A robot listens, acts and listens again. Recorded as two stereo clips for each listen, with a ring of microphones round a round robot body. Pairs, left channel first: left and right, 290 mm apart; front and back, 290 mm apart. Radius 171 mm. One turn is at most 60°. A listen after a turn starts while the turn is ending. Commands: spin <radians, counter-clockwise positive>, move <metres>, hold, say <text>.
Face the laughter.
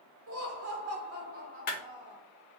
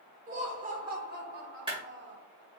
spin -1.05
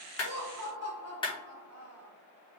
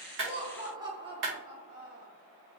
spin -1.05
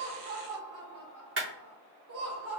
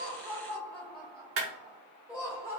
spin -1.05
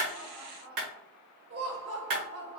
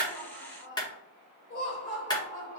spin -0.61
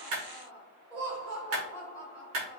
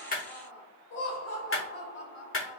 say Facing the laughter, 2 to 4 m away.